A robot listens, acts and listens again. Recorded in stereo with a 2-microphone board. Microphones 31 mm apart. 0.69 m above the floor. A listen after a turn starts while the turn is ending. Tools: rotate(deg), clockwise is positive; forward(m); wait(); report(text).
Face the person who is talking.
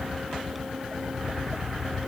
wait()
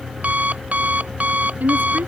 rotate(90)
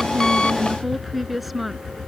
report("Facing the woman speaking.")